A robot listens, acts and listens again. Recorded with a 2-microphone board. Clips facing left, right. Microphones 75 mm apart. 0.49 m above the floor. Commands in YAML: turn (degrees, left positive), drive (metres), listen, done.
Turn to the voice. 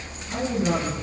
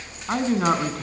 turn: -75
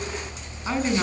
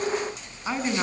done: "Facing the man speaking, over 4 m away."